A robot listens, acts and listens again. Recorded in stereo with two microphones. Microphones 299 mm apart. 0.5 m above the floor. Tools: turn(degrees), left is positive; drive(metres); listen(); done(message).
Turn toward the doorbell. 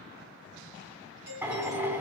turn(degrees=-70)
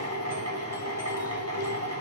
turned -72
listen()
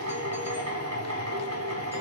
listen()
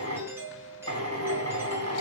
turn(degrees=-10)
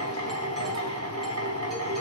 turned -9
listen()
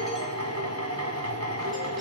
listen()
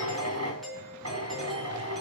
done("Facing the doorbell.")